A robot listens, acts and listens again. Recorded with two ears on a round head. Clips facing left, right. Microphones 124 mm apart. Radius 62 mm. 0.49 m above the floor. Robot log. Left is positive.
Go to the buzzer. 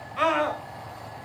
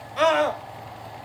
cmd idle
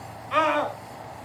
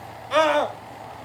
cmd idle
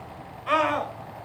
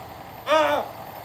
end: I can't make out a buzzer to turn to.